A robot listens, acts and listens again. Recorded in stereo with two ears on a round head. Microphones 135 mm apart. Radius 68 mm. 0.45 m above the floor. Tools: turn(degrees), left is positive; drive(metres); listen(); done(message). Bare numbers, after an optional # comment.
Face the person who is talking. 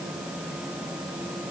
listen()
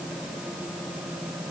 listen()
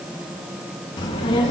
# The child speaking: about 35° left or 145° left.
turn(35)
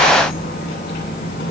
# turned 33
# So it is at 110° left.
turn(110)
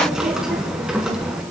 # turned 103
done("Facing the child speaking, over 4 m away.")